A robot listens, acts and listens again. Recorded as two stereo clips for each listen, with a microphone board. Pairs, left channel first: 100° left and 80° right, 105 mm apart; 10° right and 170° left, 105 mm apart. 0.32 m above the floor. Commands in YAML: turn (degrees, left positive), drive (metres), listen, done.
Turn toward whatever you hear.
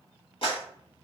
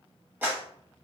turn: 100
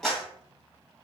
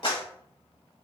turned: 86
turn: 15
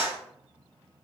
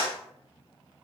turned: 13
done: "Facing the clap."